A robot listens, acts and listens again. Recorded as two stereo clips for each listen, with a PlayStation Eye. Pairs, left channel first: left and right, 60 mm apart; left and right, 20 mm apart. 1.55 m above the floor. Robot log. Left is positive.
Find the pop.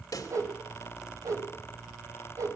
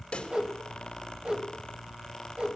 note: The pop: about 70° left or 110° left.
cmd yaw +70
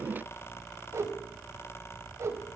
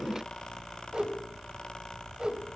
cmd idle
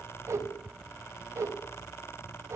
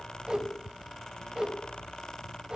end: I heard a pop, but can't make it out now. It was about straight ahead or 40° left.